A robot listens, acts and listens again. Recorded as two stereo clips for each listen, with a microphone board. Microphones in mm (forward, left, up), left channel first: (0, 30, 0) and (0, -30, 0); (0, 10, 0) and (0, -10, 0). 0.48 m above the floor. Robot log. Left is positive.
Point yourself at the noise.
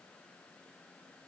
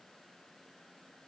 cmd idle
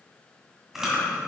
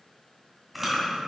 cmd yaw -30
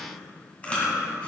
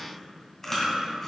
note: So it is at 25° left.
cmd yaw +25
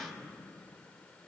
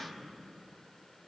cmd idle
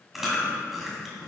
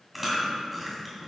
end: Facing the chewing.